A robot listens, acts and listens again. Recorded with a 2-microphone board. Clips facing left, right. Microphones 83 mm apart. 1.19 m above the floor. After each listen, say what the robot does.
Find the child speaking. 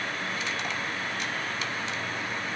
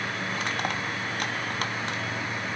Keep listening.
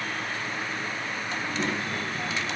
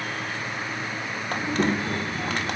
Turn 35° right.
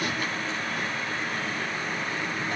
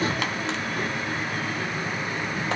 Keep listening.
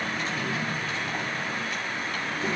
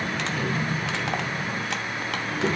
Turn 40° right.
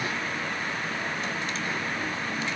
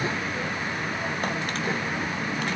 Turn 100° right.
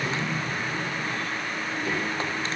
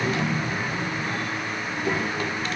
Turn 15° right.
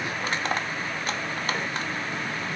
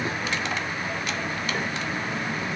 Found it: a child speaking, straight ahead.